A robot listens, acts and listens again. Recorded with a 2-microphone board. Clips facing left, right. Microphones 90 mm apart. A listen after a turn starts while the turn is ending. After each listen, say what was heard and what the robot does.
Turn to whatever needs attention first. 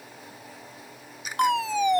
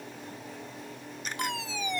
The fire alarm: about 55° left or 125° left. Turn 55° left.
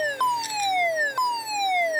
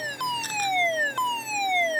So it is at 15° left. Turn 15° left.
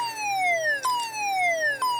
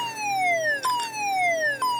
Found it: a fire alarm, straight ahead.